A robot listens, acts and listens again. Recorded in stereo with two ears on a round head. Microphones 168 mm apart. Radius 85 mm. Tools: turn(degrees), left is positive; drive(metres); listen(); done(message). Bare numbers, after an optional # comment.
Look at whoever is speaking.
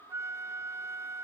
listen()
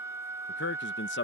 # The man speaking: about 65° left or 115° left.
turn(65)
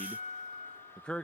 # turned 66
done("Facing the man speaking.")